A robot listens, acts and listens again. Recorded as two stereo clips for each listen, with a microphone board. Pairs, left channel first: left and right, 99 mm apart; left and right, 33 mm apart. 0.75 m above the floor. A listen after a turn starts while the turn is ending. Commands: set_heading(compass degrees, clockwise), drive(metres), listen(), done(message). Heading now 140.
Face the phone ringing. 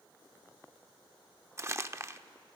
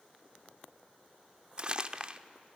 listen()
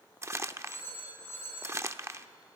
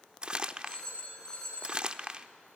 set_heading(115)
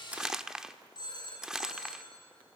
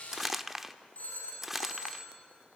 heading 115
set_heading(345)
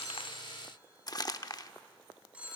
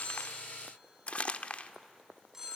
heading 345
set_heading(0)
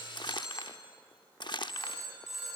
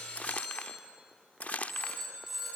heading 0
done("Found it: a phone ringing, straight ahead.")